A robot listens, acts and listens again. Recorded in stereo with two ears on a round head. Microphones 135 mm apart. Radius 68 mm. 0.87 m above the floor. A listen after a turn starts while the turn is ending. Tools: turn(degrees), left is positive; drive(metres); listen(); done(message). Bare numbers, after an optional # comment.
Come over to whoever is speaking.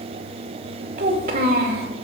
# The child speaking: about 60° right or 120° right.
turn(-60)
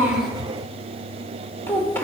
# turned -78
# So it is at 15° left.
turn(15)
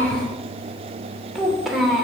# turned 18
drive(1.0)
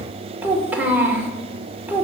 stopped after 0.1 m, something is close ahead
# The child speaking is now 10° right.
turn(-10)
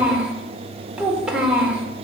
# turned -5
done("Blocked. The child speaking is further on, straight ahead.")